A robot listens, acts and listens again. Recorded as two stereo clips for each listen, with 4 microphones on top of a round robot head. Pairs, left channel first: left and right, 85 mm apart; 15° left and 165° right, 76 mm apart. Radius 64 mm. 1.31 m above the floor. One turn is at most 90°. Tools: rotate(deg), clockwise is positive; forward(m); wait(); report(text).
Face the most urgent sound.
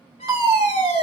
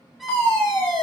rotate(50)
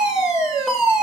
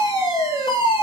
report("Found it: a fire alarm, straight ahead.")